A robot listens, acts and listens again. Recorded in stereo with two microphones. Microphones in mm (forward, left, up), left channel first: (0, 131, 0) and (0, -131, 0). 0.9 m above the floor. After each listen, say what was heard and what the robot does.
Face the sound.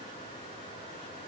Keep listening.
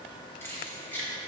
Turn 30° left.
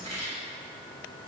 So it is at 25° right. Turn 25° right.
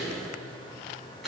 Facing the keys jangling, over 4 m away.